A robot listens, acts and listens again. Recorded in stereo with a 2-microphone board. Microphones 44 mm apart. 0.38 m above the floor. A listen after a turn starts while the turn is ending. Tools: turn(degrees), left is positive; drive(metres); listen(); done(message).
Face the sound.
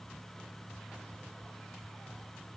listen()
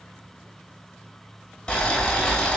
turn(degrees=15)
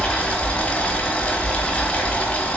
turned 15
turn(degrees=155)
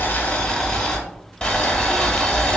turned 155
turn(degrees=20)
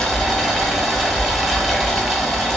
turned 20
done("Found it: boiling, straight ahead.")